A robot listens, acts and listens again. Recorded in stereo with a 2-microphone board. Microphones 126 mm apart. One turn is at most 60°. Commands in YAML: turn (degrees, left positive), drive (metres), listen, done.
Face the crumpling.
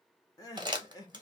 turn: -35
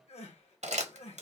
turn: -60
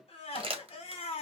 turn: -50
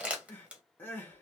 turn: -10
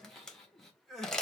done: "Facing the crumpling."